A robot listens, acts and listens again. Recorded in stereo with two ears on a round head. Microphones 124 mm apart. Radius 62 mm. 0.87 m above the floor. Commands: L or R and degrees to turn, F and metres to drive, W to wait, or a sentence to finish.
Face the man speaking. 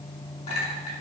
W
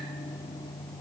W
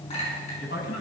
L90
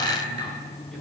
W
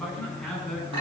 Found it: a man speaking, straight ahead.